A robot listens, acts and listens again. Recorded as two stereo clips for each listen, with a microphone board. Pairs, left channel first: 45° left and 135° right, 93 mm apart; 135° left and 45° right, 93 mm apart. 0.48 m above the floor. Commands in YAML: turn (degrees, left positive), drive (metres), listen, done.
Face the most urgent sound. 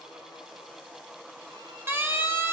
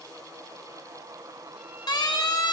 turn: 165
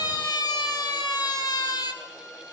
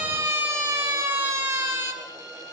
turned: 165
turn: 20
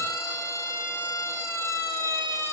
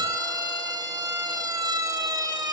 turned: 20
done: "Facing the siren, 2 to 4 m away."